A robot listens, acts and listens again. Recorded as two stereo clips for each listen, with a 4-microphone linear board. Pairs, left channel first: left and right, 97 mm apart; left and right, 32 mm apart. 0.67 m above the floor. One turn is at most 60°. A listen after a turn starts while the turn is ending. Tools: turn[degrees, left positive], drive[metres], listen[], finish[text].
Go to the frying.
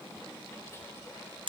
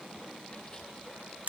Action: listen[]
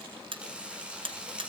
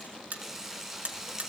Action: turn[-30]
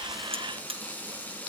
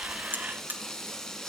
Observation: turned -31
Thought: So it is at 20° left.
Action: turn[20]
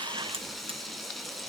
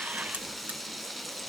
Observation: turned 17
Action: drive[1.0]
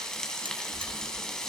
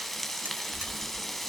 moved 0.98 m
Action: drive[1.0]
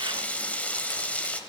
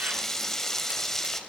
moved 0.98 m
Thought: The frying is now 15° left.
Action: turn[15]
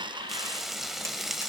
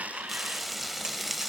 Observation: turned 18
Action: drive[1.0]
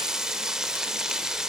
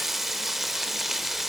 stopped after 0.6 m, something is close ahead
Action: finish[I am next to the frying.]